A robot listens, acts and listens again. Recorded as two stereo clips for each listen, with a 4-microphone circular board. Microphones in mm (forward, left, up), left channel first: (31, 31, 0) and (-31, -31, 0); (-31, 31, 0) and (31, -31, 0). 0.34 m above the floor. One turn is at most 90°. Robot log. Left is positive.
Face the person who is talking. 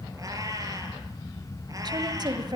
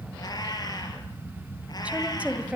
note: The woman speaking: 120° right.
cmd yaw -90
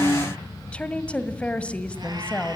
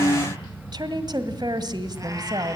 note: The woman speaking is now 30° right.
cmd yaw -30
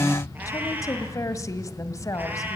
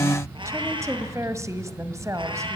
end: Facing the woman speaking, 1 to 2 m away.